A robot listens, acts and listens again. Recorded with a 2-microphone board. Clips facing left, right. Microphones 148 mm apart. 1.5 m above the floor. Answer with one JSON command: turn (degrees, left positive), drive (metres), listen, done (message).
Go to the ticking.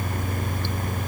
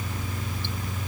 {"listen": true}
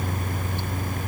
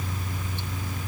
{"listen": true}
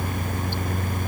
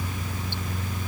{"done": "I can't make out ticking."}